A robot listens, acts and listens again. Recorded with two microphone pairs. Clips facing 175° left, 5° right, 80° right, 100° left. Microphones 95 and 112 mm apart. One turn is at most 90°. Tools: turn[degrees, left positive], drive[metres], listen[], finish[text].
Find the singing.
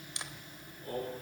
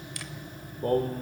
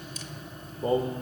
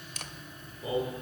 Thought: The singing: 35° right.
Action: turn[-35]
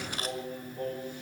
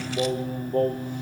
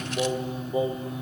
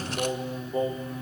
Action: finish[Facing the singing.]